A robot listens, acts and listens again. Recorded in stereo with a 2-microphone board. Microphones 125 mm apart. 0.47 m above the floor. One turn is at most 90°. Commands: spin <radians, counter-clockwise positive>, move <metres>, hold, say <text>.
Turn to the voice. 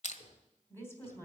spin 0.35
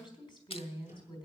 spin 1.57
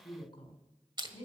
spin 0.70
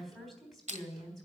say Facing the woman speaking.